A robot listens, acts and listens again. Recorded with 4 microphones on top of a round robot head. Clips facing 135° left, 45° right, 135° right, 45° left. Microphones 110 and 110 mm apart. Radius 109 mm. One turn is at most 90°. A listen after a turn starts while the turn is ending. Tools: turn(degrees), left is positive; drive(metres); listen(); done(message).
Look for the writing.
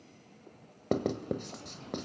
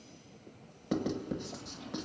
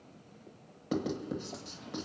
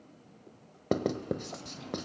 turn(degrees=90)
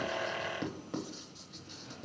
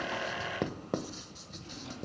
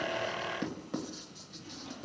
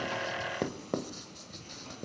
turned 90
done("Found it: writing, straight ahead, 1 to 2 m away.")